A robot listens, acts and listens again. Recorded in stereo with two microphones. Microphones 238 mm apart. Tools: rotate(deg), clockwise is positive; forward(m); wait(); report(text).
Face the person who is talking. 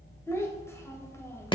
rotate(-30)
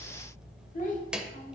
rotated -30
rotate(-140)
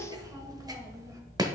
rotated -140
rotate(15)
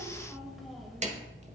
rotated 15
report("Facing the child speaking, 1 to 2 m away.")